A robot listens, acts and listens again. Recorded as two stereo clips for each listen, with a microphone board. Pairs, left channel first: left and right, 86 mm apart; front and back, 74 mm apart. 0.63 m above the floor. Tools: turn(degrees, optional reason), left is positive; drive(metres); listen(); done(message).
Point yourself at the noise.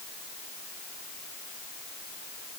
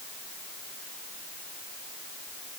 listen()
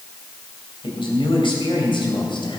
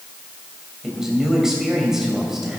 turn(degrees=100, reason="The man speaking: 100° left.")
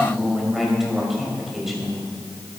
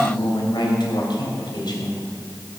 done("Found it: a man speaking, straight ahead, 2 to 4 m away.")